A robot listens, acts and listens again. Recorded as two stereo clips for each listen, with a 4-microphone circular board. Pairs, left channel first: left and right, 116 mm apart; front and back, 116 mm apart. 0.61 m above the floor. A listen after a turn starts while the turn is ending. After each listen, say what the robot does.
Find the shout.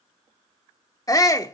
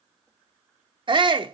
Turn 145° left.
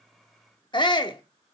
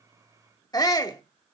Turn 50° left.
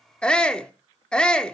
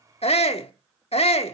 Turn 10° left.
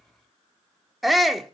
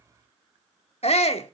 Facing the shout.